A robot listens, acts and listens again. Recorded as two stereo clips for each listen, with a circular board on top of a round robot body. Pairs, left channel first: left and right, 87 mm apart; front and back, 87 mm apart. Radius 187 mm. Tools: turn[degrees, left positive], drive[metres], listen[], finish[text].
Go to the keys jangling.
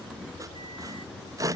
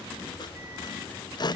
Action: listen[]
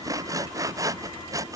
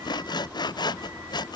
Action: listen[]
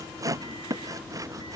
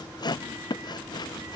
Action: finish[I can't make out keys jangling to turn to.]